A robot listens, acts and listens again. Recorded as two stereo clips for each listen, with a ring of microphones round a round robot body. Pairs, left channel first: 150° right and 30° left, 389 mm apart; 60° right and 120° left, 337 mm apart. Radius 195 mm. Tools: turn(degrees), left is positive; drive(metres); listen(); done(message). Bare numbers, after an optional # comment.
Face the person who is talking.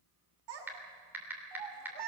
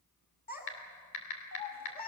done("Facing the child speaking, over 4 m away.")